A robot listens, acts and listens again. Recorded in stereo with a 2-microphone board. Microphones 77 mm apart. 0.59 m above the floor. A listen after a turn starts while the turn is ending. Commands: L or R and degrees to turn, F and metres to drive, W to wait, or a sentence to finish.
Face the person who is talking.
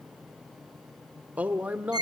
R20
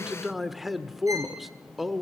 Found it: a man speaking, straight ahead, 1 to 2 m away.